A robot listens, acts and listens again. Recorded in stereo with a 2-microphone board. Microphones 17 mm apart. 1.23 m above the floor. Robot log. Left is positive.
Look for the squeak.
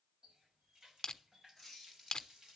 cmd yaw +30
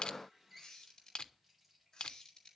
note: So it is at 150° left.
cmd yaw +150
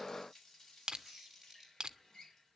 note: The squeak is now 10° right.
cmd yaw -10
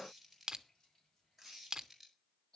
end: Found it: a squeak, straight ahead.